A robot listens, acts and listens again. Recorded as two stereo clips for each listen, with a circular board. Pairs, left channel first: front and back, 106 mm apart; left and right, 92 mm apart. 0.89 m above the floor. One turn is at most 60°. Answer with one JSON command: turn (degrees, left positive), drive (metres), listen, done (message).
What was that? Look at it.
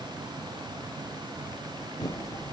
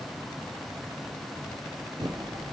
{"turn": -50}
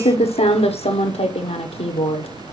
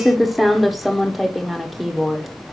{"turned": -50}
{"done": "Found it: typing on a keyboard, straight ahead."}